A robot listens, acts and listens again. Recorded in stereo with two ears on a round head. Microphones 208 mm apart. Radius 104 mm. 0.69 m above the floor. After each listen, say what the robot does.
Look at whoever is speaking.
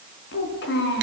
Turn 45° left.
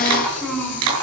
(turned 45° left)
Found it: a child speaking, straight ahead.